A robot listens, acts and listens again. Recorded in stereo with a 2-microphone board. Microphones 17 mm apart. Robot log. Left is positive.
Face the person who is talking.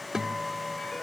cmd idle
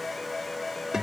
cmd idle
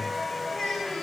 note: The child speaking: about 40° left or 140° left.
cmd yaw +40
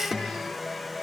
cmd idle
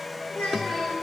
note: So it is at 100° left.
cmd yaw +100
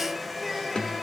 note: The child speaking is now 10° left.
cmd yaw +10
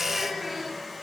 end: Found it: a child speaking, straight ahead, over 4 m away.